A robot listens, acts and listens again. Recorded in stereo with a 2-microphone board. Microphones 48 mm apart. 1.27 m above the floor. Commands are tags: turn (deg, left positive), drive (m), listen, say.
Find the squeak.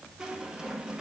<turn deg="-30"/>
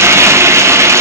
<listen/>
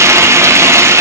<listen/>
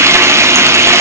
<say>I heard a squeak, but can't make it out now. It was about 15° left or 135° right.</say>